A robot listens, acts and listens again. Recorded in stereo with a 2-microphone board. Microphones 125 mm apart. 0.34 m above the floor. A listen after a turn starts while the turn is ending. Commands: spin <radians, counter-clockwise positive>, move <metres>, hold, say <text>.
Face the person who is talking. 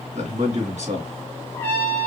spin -1.22
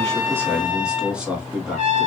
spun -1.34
spin -0.17
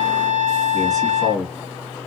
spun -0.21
say Facing the man speaking, 2 to 4 m away.